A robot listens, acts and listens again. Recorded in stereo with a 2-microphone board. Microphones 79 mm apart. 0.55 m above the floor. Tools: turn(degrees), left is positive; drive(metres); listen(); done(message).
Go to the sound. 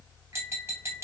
turn(degrees=-35)
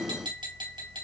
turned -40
turn(degrees=-105)
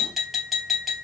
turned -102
drive(metres=1.0)
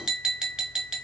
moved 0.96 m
turn(degrees=-10)
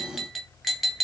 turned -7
drive(metres=1.0)
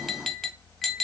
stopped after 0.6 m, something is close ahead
done("Arrived at the tapping, straight ahead.")